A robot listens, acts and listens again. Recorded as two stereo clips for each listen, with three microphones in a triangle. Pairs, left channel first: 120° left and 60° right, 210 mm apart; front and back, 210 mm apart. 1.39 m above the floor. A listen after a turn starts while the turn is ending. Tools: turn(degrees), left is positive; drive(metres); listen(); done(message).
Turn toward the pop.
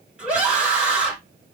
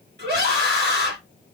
listen()
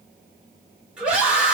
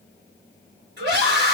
listen()
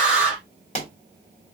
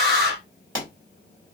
turn(degrees=175)
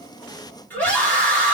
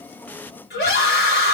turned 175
done("I heard a pop from this way, but can't make it out now.")